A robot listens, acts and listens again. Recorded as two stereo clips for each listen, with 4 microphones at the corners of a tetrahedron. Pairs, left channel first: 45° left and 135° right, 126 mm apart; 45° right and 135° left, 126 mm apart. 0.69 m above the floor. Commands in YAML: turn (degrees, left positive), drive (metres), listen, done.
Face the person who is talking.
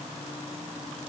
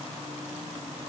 listen: true
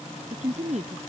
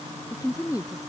turn: -110
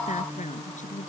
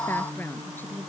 turn: 30
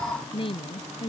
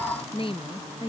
done: "Facing the woman speaking."